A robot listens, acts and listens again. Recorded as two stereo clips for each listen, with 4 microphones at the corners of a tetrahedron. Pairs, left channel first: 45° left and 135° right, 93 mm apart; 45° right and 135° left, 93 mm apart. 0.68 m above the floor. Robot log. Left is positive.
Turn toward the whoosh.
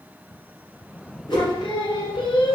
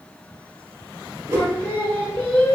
note: The whoosh: 80° left.
cmd yaw +80
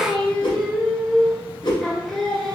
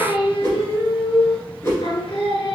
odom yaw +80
note: The whoosh is now 15° left.
cmd yaw +15
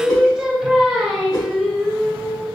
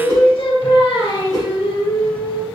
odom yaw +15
end: Found it: a whoosh, straight ahead, 1 to 2 m away.